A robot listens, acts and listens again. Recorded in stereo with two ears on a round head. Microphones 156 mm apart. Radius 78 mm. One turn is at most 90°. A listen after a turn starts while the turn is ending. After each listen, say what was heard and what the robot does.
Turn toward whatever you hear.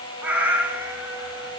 Turn 30° right.
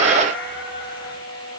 So it is at 10° left. Turn 10° left.
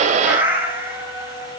The cat meowing is now 15° right. Turn 15° right.
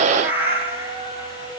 The cat meowing is now 15° right. Turn 15° right.
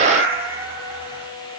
The cat meowing is now 15° right. Turn 15° right.
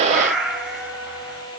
Found it: a cat meowing, straight ahead, 2 to 4 m away.